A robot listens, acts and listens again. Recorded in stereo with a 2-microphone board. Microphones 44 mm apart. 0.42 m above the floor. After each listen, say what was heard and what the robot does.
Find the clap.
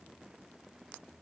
Keep listening.
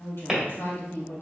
Turn 30° right.
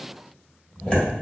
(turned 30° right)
So it is at 25° left. Turn 25° left.
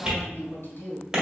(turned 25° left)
The clap is now 20° right. Turn 20° right.
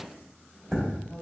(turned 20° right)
Found it: a clap, straight ahead.